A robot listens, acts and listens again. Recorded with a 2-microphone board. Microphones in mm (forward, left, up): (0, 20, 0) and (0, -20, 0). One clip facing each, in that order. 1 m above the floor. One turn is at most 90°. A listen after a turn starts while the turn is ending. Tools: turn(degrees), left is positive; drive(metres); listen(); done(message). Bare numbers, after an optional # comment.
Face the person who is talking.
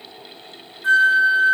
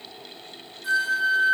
listen()
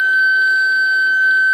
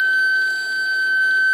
listen()
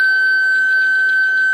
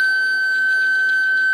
done("I can't make out anyone speaking to turn to.")